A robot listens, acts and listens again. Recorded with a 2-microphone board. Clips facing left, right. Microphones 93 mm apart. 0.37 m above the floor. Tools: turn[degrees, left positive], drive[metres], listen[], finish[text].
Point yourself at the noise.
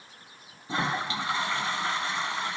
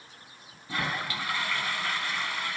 Thought: The toilet flushing: about 25° left or 155° left.
Action: turn[25]
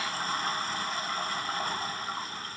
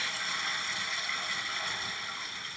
Thought: So it is at 125° left.
Action: turn[125]
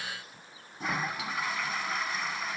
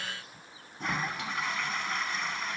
Action: finish[Found it: a toilet flushing, straight ahead, 1 to 2 m away.]